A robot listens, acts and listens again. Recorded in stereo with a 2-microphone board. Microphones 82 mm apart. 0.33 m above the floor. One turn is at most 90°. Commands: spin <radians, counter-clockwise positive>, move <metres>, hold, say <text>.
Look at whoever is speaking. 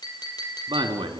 spin -1.22
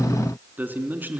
spin -0.44
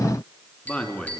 spin 0.26
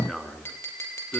say Found it: a man speaking, straight ahead, 2 to 4 m away.